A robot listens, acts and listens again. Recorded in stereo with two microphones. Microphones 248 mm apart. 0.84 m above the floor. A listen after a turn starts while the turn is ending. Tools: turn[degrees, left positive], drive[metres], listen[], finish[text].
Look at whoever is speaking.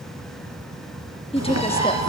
Thought: The woman speaking: about 20° left or 160° left.
Action: turn[20]
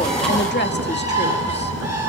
Thought: So it is at 135° left.
Action: turn[135]
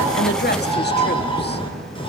Action: listen[]
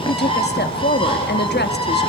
Thought: The woman speaking is now 45° left.
Action: turn[45]
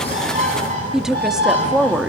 Action: finish[Facing the woman speaking, 1 to 2 m away.]